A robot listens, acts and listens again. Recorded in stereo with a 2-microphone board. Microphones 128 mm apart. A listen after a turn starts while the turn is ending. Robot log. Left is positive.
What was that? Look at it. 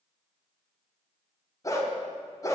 note: The dog barking: about 25° left or 155° left.
cmd yaw +25
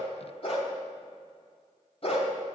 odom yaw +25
note: So it is at 125° left.
cmd yaw +125
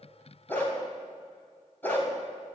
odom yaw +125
note: The dog barking is now 15° left.
cmd yaw +15
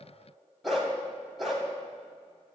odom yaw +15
end: Facing the dog barking, 2 to 4 m away.